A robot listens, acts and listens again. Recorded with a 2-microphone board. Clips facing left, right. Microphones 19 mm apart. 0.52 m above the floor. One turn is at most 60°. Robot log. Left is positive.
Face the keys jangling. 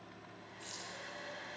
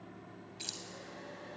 note: The keys jangling: about 65° right or 115° right.
cmd yaw -60
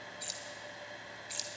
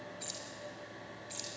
note: So it is at 25° left.
cmd yaw +25
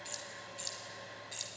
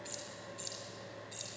note: The keys jangling is now 25° left.
cmd yaw +25
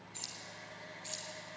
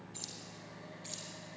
note: The keys jangling is now 10° left.
cmd yaw +10
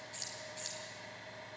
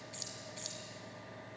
end: Found it: keys jangling, straight ahead, 2 to 4 m away.